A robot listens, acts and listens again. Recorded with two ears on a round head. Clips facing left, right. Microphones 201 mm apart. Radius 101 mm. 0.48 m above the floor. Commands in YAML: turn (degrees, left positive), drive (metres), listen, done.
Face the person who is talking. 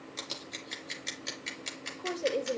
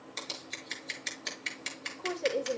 turn: 30
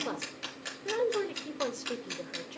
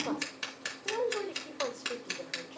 turn: 150
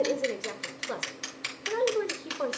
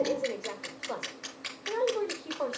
turn: 25
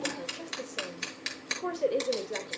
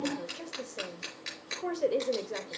done: "Facing the woman speaking, 1 to 2 m away."